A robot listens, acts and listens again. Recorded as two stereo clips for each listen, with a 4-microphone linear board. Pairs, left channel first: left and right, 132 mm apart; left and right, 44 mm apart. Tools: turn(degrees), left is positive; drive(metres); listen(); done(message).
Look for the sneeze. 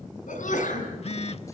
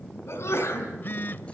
turn(degrees=90)
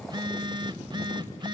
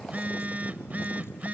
done("I heard a sneeze from this way, but can't make it out now.")